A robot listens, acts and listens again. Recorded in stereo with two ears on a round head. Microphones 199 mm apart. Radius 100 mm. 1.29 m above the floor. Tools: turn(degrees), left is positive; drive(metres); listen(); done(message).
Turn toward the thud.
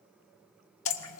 listen()
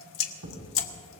turn(degrees=-75)
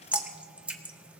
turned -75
listen()
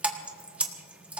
done("I heard a thud, but can't make it out now. It was about straight ahead or 30° right.")